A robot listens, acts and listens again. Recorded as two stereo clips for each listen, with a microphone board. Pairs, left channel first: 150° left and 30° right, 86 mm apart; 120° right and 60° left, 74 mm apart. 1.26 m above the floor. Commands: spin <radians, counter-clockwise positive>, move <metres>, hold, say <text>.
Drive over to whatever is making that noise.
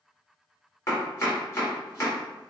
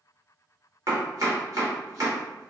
spin 1.75
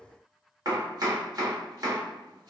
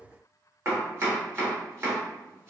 spin 0.17
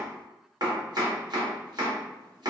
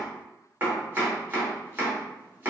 move 1.0
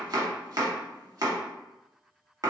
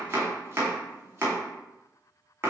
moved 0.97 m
spin 0.17
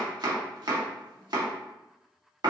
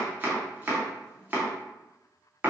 move 1.0
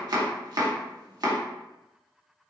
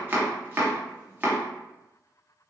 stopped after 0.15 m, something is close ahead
say Arrived at the chopping, straight ahead.